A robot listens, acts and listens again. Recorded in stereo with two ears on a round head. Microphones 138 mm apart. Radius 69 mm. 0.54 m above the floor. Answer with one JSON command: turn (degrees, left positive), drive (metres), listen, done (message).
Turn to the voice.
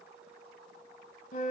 {"listen": true}
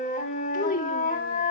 {"turn": 55}
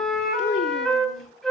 {"turn": 60}
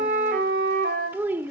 {"turn": -15}
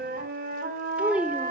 {"turn": -10}
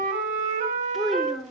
{"done": "Facing the child speaking."}